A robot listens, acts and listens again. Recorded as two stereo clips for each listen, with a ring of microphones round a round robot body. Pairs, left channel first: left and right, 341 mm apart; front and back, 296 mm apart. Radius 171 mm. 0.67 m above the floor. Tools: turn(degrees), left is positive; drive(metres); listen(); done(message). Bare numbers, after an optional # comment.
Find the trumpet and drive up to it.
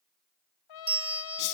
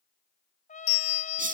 # The trumpet: 65° left.
turn(65)
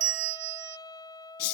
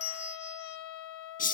# The trumpet is now 10° left.
turn(10)
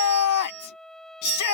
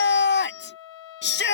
drive(1.0)
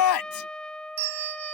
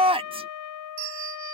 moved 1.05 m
drive(1.0)
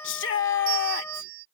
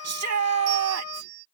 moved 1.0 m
drive(1.0)
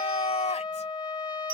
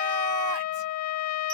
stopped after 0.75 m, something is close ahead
# The trumpet is now 15° left.
turn(15)
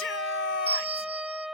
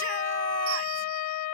done("I am next to the trumpet.")